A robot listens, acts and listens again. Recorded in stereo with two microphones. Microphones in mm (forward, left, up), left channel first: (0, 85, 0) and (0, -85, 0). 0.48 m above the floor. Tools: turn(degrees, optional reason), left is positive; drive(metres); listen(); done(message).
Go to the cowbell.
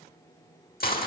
listen()
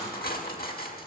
listen()
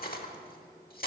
done("I can't make out a cowbell, only cutlery clinking.")